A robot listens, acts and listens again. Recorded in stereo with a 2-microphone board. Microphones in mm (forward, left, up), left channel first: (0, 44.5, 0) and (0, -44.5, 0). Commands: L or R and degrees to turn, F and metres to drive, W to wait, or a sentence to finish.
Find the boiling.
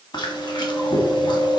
W
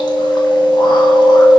W
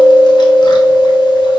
I can't make out boiling, only chewing.